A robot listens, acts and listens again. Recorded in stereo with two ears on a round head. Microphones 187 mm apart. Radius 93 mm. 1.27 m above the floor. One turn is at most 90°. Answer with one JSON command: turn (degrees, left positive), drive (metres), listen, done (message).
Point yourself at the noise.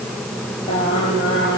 {"turn": 25}
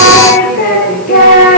{"turn": 90}
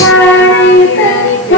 {"turn": 60}
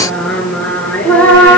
{"done": "Found it: singing, straight ahead, 2 to 4 m away."}